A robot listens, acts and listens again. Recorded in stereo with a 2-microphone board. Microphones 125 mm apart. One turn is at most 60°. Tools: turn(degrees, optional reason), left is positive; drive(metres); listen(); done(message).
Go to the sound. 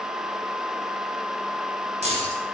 turn(degrees=-60, reason="The keys jangling: about 60° right or 120° right.")
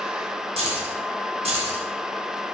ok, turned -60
turn(degrees=-55, reason="So it is at 55° right.")
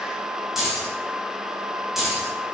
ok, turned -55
drive(metres=1.0)
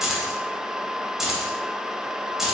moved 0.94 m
drive(metres=1.0)
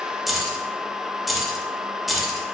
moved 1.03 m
drive(metres=1.0)
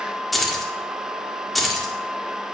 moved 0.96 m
drive(metres=1.0)
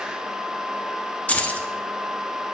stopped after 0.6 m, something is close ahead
turn(degrees=10, reason="The keys jangling is now 10° left.")
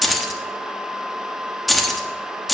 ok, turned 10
done("Arrived at the keys jangling, straight ahead.")